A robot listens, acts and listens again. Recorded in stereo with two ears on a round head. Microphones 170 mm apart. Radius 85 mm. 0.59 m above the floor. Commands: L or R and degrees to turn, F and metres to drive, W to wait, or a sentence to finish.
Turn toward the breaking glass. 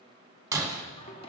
R15
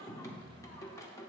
W
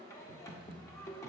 I heard breaking glass, but can't make it out now. It was about straight ahead or 150° right.